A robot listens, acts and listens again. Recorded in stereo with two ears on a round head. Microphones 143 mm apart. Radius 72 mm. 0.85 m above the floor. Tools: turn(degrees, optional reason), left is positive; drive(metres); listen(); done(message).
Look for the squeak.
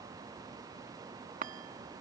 listen()
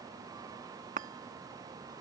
listen()
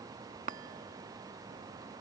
done("I can't make out a squeak, only a chime.")